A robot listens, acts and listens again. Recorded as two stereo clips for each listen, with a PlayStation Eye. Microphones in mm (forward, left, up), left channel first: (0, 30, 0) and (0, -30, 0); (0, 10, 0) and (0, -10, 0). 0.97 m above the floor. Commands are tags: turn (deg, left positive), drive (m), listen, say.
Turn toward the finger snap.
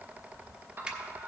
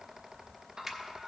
<turn deg="-15"/>
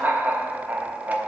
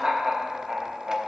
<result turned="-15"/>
<listen/>
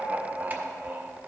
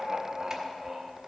<listen/>
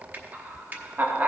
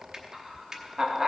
<turn deg="-150"/>
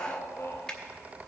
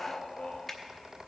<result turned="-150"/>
<turn deg="15"/>
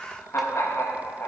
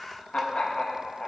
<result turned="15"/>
<listen/>
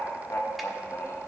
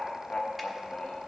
<listen/>
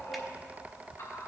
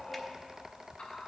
<say>I heard a finger snap from this way, but can't make it out now.</say>